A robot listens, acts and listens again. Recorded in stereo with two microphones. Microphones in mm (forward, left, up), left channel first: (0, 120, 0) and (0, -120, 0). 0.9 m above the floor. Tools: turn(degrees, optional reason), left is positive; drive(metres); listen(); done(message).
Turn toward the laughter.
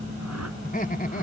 turn(degrees=35, reason="The laughter: about 35° left or 145° left.")
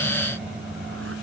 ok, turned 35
listen()
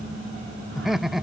done("Facing the laughter.")